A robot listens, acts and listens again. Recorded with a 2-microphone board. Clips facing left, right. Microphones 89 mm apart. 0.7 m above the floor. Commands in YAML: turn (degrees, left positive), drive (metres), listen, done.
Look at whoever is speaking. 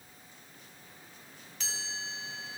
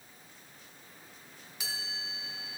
listen: true
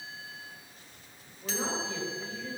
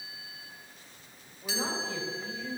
turn: 30
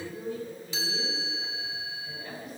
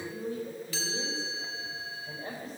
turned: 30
turn: -30
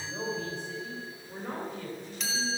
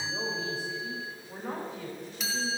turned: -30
done: "Facing the man speaking, 2 to 4 m away."